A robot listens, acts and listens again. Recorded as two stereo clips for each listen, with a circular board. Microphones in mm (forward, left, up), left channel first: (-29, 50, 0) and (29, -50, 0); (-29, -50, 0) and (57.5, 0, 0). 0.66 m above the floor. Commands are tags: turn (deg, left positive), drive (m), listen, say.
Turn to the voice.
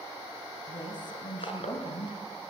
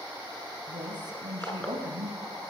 <turn deg="75"/>
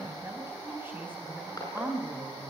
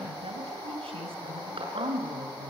<turn deg="15"/>
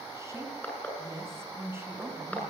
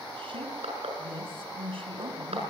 <turn deg="10"/>
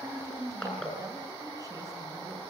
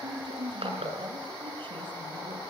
<say>Facing the woman speaking.</say>